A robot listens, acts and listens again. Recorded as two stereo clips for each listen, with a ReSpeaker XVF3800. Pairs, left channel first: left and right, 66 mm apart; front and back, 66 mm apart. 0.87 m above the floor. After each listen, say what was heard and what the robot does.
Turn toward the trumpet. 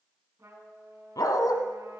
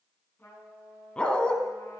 The trumpet: 50° right. Turn 50° right.
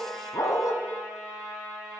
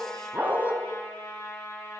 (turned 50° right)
Facing the trumpet, over 4 m away.